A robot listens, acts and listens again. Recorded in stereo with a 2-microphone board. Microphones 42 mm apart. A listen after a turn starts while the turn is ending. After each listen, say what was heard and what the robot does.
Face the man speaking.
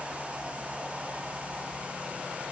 Keep listening.
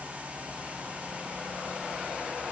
Keep listening.
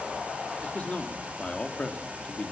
The man speaking: about 35° left or 145° left. Turn 35° left.
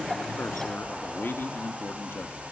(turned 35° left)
So it is at 110° left. Turn 110° left.
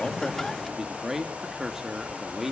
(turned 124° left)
The man speaking is now 10° right. Turn 10° right.
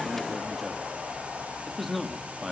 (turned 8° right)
Facing the man speaking, 2 to 4 m away.